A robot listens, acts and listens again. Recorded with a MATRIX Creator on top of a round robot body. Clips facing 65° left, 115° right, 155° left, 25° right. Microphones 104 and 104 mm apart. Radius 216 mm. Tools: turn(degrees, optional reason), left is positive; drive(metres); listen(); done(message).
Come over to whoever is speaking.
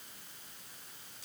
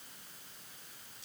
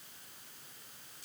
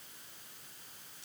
listen()
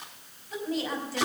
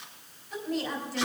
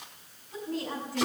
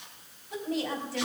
turn(degrees=-15, reason="The woman speaking: 15° right.")
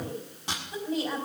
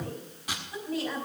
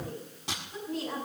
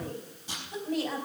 drive(metres=1.0)
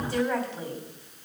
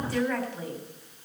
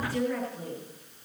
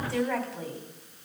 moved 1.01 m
drive(metres=1.0)
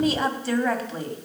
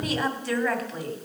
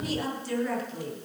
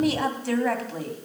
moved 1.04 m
drive(metres=1.0)
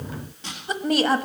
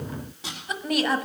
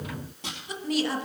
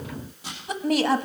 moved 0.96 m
turn(degrees=10, reason="The woman speaking is now 10° left.")
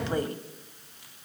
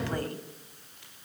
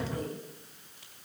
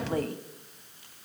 drive(metres=1.0)
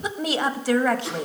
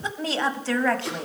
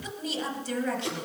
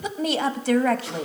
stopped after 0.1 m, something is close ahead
turn(degrees=-10, reason="The woman speaking is now 10° right.")
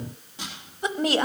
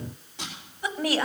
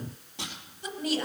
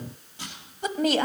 done("I am next to the woman speaking.")